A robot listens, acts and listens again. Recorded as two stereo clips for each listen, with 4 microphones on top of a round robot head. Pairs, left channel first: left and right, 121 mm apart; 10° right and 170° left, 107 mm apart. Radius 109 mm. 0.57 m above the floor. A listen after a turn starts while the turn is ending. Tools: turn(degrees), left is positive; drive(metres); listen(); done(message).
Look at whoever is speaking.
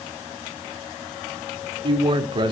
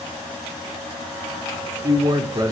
turn(degrees=-135)
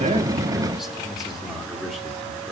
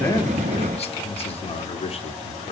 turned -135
done("Facing the man speaking.")